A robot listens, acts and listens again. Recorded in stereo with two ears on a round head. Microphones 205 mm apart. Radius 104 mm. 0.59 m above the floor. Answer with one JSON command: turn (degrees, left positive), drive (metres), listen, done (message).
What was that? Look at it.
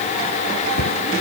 {"turn": 55}
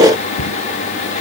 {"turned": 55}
{"turn": 70}
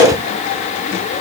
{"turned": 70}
{"listen": true}
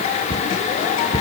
{"turn": 15}
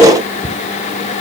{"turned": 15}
{"done": "Found it: a cupboard door, straight ahead."}